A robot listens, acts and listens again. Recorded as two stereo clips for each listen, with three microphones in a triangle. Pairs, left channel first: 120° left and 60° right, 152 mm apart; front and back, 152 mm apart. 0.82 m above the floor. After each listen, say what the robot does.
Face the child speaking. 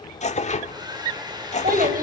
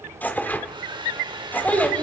Turn 80° right.
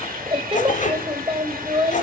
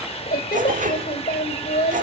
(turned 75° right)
Turn 10° right.
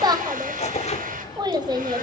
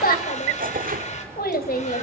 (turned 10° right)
Found it: a child speaking, straight ahead.